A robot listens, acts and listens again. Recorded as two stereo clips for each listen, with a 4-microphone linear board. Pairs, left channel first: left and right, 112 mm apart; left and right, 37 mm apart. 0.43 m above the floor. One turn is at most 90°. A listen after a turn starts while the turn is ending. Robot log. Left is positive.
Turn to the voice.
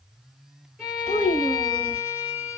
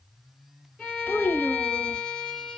note: The child speaking: about 65° left or 115° left.
cmd yaw +65
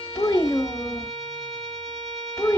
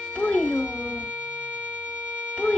note: So it is at 30° left.
cmd yaw +30
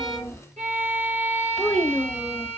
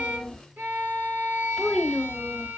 end: Found it: a child speaking, straight ahead.